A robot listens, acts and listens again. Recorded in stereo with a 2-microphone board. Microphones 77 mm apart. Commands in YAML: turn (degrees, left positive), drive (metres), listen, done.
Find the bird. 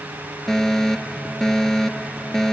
listen: true
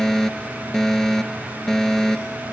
listen: true
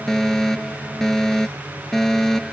done: "I can't make out a bird, only a fire alarm."